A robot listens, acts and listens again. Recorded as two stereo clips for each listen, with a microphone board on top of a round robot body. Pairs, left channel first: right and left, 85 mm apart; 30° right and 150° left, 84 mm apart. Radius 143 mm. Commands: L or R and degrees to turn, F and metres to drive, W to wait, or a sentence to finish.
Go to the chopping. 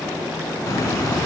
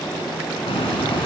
W
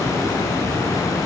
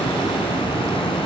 W
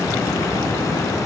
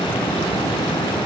I can't make out chopping, only a hiss.